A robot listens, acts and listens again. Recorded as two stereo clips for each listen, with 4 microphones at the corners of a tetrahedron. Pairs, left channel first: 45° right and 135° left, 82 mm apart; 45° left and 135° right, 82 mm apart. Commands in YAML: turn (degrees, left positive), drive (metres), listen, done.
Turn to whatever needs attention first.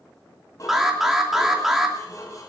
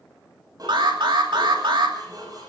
turn: -140
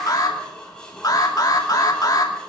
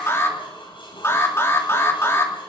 turn: -10
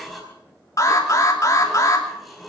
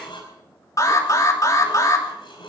done: "Facing the alarm, 2 to 4 m away."